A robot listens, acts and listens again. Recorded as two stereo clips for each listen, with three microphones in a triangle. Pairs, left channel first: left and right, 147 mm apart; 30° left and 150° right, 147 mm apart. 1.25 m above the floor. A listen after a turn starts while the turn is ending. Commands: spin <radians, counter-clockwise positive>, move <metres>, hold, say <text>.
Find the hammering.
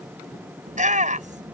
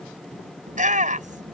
hold
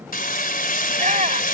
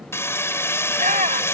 spin 1.83
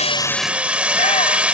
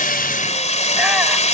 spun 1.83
spin -0.17
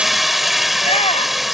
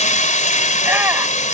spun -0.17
say Facing the hammering.